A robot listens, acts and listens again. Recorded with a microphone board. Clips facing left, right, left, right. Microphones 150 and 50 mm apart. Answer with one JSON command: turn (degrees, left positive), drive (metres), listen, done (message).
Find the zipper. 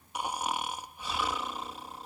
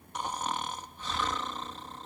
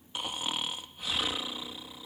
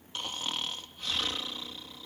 {"listen": true}
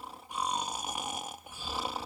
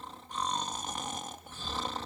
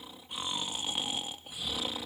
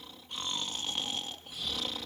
{"listen": true}
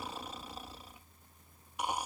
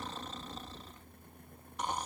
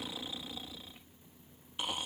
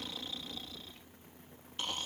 {"done": "I can't make out a zipper, only snoring."}